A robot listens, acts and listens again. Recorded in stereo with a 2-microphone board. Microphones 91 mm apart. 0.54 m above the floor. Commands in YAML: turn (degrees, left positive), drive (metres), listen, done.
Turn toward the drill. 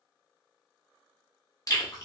listen: true
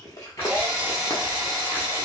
turn: -25
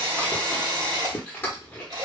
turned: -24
turn: -130
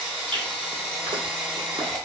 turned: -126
done: "Found it: a drill, straight ahead, 1 to 2 m away."